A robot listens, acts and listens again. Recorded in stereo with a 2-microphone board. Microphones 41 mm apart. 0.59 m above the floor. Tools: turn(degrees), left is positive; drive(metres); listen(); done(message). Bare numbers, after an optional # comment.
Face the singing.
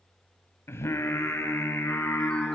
turn(90)
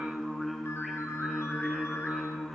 done("Facing the singing, over 4 m away.")